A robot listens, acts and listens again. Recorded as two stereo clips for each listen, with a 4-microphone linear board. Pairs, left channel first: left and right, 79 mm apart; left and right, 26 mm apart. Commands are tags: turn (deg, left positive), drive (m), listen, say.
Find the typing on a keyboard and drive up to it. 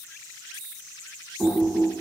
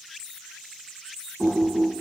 <turn deg="30"/>
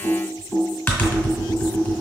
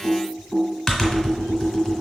<turn deg="155"/>
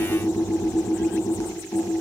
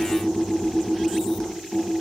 <turn deg="30"/>
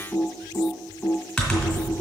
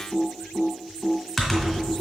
<drive m="1.0"/>
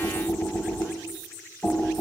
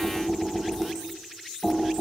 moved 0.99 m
<turn deg="10"/>
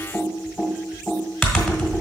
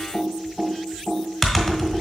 <drive m="1.0"/>
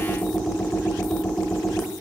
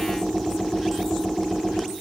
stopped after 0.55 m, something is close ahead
<say>I am next to the typing on a keyboard.</say>